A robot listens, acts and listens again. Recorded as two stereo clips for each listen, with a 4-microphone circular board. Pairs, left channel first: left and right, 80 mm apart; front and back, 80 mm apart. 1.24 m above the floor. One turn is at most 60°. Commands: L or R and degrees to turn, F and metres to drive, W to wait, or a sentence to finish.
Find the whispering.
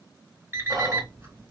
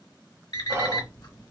R60
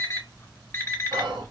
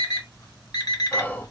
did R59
R60
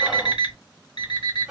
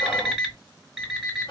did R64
Facing the whispering.